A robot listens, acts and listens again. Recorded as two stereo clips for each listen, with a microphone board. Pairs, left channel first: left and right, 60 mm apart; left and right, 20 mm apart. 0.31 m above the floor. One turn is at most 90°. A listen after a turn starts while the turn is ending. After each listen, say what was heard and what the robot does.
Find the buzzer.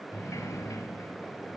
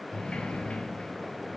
Keep listening.
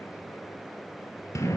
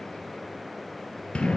Keep listening.
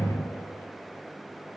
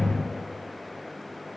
I can't make out a buzzer, only a sliding door.